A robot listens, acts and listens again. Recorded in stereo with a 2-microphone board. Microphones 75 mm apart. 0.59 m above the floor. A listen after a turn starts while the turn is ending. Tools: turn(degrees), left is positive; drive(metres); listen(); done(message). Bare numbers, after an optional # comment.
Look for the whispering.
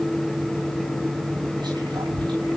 turn(-90)
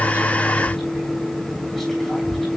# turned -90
done("Facing the whispering, over 4 m away.")